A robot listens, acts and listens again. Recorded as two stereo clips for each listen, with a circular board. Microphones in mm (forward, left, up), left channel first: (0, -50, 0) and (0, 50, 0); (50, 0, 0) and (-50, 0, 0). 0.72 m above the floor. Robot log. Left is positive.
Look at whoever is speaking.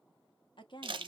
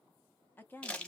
note: The woman speaking: 70° right.
cmd yaw -70
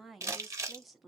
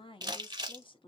end: Facing the woman speaking, under 1 m away.